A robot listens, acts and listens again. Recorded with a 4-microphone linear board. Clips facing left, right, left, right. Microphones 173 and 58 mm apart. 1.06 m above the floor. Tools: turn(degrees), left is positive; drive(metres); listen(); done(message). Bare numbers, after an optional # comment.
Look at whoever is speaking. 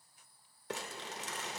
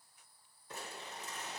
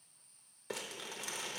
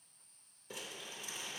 listen()
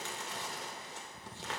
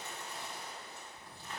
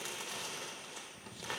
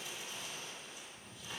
listen()
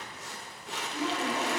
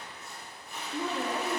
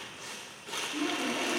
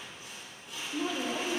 # The woman speaking: about 65° right or 115° right.
turn(-65)
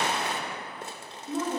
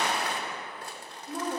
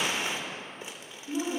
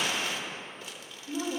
done("Facing the woman speaking, 1 to 2 m away.")